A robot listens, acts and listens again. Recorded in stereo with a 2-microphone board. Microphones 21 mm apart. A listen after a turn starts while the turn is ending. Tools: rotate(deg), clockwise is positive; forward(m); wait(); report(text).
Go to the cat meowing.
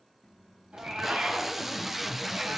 rotate(60)
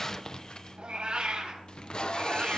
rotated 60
rotate(55)
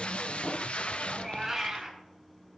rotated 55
forward(1.0)
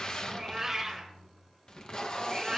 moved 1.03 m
rotate(15)
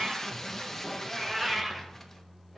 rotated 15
forward(1.0)
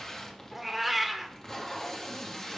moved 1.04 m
forward(1.0)
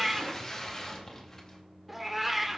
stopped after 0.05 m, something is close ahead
report("I am next to the cat meowing.")